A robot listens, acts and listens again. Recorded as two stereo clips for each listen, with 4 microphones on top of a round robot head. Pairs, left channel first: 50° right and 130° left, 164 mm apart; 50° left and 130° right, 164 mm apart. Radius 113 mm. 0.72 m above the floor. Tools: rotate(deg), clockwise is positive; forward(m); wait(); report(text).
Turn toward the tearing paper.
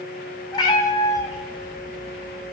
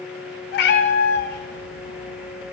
wait()
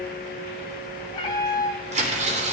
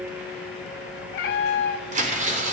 rotate(-180)
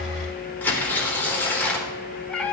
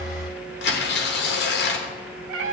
rotate(-30)
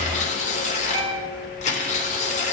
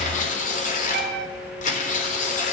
report("Facing the tearing paper.")